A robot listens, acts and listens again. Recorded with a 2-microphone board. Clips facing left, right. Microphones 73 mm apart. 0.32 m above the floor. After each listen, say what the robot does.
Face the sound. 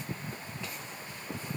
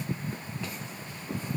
Keep listening.
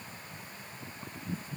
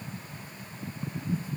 Keep listening.
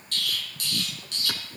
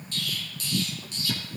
Turn 90° left.
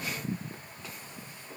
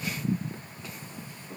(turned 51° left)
Turn 40° left.
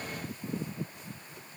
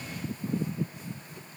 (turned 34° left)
Facing where the explosion came from. I can't hear it now.